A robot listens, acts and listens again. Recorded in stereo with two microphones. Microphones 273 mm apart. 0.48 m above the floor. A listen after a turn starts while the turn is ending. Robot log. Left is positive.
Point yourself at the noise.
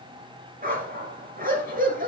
note: The dog barking: about 35° right or 145° right.
cmd yaw -35
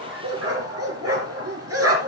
note: So it is at 110° right.
cmd yaw -110
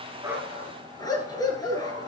note: The dog barking is now 15° left.
cmd yaw +15
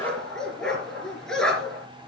end: Found it: a dog barking, straight ahead, 2 to 4 m away.